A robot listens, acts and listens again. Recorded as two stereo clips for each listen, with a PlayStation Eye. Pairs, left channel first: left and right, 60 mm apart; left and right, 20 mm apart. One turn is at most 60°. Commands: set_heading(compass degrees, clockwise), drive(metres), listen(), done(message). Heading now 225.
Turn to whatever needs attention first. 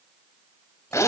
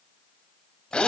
listen()
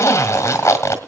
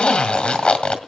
listen()
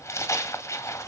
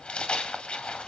done("I can't make out anything urgent to turn to.")